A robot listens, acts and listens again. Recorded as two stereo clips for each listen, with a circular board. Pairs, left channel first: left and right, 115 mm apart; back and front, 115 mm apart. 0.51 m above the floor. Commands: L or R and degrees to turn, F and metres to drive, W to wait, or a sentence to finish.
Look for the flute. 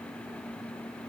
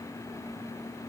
W
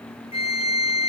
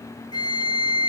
L130
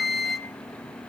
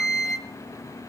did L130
Found it: a flute, straight ahead, 1 to 2 m away.